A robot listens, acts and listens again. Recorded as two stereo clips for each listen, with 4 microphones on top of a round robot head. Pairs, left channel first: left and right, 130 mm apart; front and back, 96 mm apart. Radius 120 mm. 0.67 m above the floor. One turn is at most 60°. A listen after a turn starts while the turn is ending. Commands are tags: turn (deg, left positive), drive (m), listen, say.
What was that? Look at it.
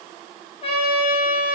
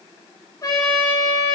<turn deg="55"/>
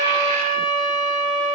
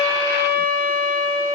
<turn deg="10"/>
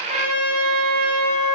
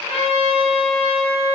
<say>Facing the trumpet.</say>